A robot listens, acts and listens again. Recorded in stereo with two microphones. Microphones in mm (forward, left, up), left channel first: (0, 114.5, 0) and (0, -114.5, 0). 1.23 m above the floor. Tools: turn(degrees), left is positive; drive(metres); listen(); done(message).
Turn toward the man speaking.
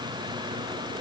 listen()
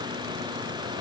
listen()
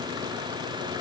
done("I can't make out a man speaking to turn to.")